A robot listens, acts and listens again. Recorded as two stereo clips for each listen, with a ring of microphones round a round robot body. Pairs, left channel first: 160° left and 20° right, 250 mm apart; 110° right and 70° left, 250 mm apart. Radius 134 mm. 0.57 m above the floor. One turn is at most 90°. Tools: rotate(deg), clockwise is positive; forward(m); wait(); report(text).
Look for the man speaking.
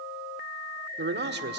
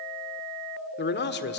rotate(70)
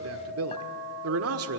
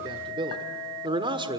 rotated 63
report("Facing the man speaking, 1 to 2 m away.")